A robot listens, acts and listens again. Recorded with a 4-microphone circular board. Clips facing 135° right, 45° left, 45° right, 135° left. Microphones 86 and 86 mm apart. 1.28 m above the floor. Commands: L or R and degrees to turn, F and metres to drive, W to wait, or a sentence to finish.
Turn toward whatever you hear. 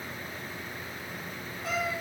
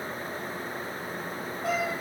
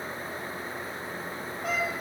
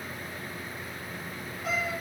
Facing the cat meowing.